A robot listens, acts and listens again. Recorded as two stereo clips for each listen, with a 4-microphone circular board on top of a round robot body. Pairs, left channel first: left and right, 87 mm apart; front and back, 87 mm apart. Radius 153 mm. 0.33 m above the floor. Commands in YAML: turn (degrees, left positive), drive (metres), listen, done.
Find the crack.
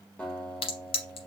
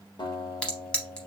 turn: 80
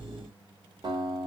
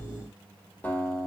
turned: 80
done: "Facing where the crack came from. I can't hear it now."